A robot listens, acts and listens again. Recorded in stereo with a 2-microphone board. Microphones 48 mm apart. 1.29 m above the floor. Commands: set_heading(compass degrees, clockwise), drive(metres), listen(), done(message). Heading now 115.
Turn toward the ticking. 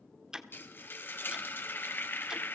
set_heading(145)
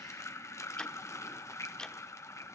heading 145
set_heading(130)
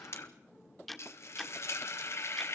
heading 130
done("Found it: ticking, straight ahead.")